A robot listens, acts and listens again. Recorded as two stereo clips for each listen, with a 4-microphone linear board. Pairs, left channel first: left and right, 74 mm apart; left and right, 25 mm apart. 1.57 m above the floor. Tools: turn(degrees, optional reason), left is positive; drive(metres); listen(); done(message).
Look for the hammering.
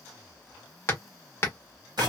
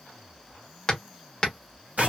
turn(degrees=35, reason="The hammering: about 35° left or 145° left.")
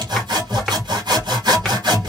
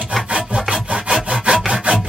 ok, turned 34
listen()
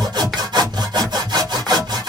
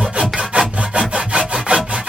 listen()
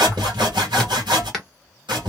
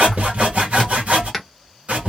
done("Facing the hammering.")